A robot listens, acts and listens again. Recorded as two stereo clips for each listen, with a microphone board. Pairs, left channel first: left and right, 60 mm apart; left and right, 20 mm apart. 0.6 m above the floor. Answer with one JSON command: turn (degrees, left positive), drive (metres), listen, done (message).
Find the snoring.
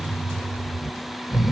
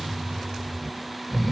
{"turn": -30}
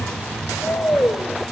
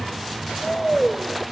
{"turn": 25}
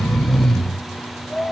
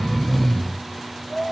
{"done": "Found it: snoring, straight ahead."}